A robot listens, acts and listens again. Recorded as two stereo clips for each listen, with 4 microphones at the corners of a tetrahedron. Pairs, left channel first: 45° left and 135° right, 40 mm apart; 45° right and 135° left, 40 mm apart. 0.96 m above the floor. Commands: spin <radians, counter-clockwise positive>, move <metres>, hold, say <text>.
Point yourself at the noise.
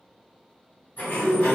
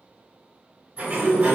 spin 1.40
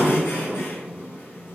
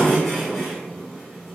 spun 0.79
spin 0.61
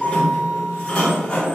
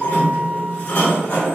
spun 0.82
spin -0.17
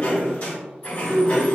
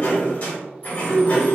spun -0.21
say Facing the sliding door.